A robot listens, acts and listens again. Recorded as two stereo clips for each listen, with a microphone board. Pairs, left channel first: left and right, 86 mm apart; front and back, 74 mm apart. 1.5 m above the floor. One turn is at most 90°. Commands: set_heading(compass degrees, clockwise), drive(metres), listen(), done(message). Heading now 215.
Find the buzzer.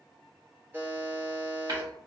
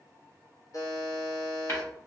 set_heading(240)
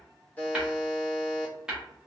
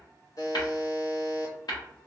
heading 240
set_heading(220)
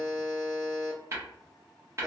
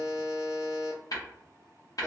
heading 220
done("Facing the buzzer, 1 to 2 m away.")